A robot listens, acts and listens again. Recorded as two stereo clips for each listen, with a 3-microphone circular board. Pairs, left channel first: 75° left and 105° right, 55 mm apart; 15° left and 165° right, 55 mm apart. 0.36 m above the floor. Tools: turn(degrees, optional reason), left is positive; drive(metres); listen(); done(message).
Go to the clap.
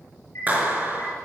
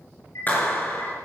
turn(degrees=-45, reason="The clap: 45° right.")
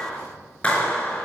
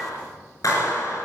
drive(metres=1.0)
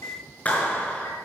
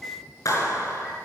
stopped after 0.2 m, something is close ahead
turn(degrees=10, reason="The clap is now 10° left.")
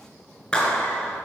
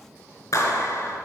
done("Something is in my way. I am facing the clap but have not reached it.")